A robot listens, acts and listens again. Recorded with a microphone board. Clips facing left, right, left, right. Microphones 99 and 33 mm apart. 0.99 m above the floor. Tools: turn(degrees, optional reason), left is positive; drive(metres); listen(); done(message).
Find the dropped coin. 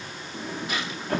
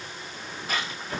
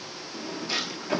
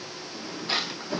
turn(degrees=-40, reason="The dropped coin: about 40° right or 140° right.")
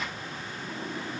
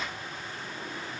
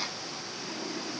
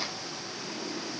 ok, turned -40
listen()
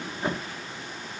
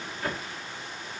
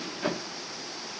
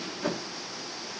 done("I heard a dropped coin, but can't make it out now. It was about straight ahead or 100° right.")